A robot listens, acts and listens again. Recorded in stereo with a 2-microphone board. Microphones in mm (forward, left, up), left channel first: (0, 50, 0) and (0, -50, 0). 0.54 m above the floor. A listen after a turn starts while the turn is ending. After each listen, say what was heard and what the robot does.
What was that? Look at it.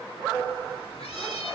Turn 90° left.
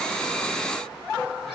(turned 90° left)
Keep listening.
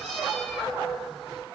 Facing the cat meowing.